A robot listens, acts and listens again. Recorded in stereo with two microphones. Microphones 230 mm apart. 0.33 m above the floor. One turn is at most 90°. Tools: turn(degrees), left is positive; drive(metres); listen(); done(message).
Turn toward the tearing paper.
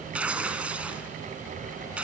turn(degrees=-30)
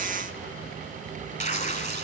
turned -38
turn(degrees=30)
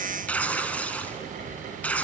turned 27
done("Found it: tearing paper, straight ahead.")